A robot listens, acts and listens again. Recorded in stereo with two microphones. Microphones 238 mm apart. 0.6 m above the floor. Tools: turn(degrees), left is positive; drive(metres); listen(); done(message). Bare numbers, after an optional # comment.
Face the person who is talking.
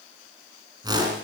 listen()
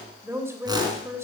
turn(-30)
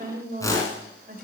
# So it is at 135° right.
turn(-135)
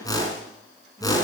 listen()
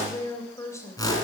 # The woman speaking is now 15° left.
turn(15)
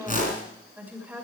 done("Facing the woman speaking.")